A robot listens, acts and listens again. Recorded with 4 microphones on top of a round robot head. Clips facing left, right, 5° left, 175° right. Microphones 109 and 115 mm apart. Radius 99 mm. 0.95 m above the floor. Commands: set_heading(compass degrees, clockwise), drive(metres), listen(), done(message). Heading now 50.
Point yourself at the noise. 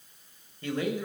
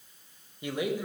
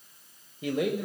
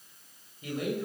set_heading(65)
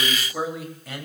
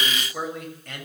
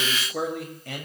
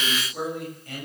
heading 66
done("Facing the man speaking.")